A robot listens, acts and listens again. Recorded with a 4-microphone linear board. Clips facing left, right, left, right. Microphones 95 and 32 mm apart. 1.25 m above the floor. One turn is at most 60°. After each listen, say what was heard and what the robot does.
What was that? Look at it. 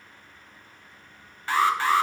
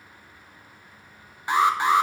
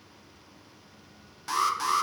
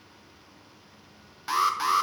The alarm: about 20° right or 160° right. Turn 20° right.
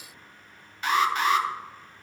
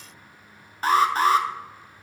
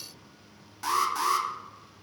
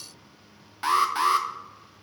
So it is at 140° right. Turn 60° right.
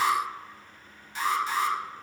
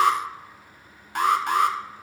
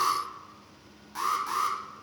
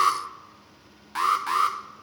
The alarm is now 60° right. Turn 60° right.
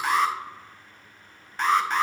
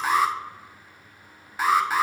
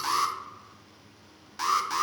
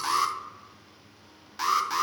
Found it: an alarm, straight ahead.